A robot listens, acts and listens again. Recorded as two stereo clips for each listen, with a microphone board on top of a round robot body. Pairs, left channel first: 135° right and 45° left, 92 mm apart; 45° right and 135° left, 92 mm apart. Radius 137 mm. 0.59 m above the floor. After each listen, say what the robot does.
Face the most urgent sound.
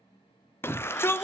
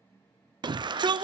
Turn 165° left.
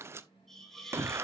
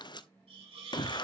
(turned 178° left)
Turn 15° right.
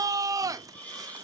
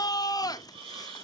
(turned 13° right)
Found it: a shout, straight ahead.